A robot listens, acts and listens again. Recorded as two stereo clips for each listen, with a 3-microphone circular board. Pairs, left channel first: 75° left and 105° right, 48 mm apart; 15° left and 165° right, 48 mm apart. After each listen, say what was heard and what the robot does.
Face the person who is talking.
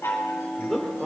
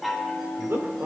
The man speaking: 165° left. Turn 165° left.
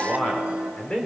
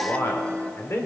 Found it: a man speaking, straight ahead.